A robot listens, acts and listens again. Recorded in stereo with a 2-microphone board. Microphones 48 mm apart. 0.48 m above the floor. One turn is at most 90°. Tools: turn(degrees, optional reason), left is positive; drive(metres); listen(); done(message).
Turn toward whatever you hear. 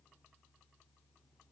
listen()
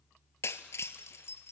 turn(degrees=70, reason="The breaking glass: about 70° left or 110° left.")
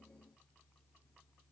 listen()
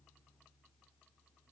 done("I heard breaking glass, but can't make it out now. It was about straight ahead or 40° left.")